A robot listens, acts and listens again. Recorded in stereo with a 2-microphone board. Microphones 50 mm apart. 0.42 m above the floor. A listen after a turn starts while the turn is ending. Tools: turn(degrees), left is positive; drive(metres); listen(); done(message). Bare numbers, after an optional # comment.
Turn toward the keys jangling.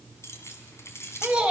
# The keys jangling: about 60° left or 120° left.
turn(60)
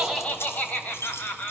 # So it is at 55° left.
turn(55)
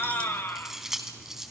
# The keys jangling is now 10° right.
turn(-10)
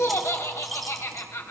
listen()
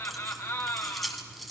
done("Facing the keys jangling.")